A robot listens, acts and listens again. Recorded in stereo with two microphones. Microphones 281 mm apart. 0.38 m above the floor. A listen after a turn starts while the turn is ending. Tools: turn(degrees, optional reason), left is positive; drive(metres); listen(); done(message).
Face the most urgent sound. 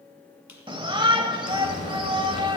turn(degrees=-20, reason="The shout: about 20° right or 160° right.")
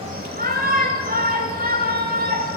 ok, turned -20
turn(degrees=-140, reason="So it is at 140° right.")
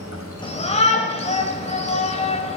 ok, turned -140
turn(degrees=30, reason="The shout is now 30° left.")
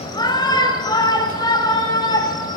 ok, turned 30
turn(degrees=20, reason="The shout is now 20° left.")
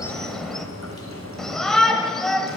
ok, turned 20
done("Facing the shout.")